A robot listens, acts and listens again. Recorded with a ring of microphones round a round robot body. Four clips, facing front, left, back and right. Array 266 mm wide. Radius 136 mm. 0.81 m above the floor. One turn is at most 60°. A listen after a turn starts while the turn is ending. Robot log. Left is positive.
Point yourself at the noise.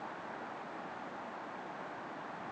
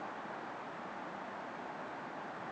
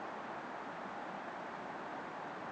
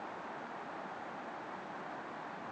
cmd idle
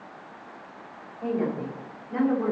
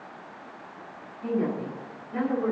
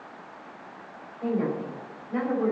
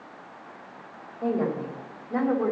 note: The woman speaking: 95° right.
cmd yaw -60
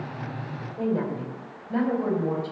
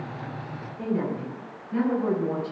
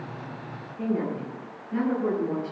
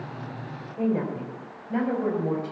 note: The woman speaking is now 50° right.
cmd yaw -50
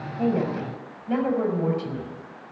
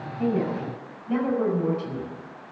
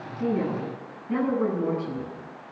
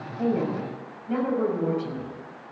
end: Facing the woman speaking, over 4 m away.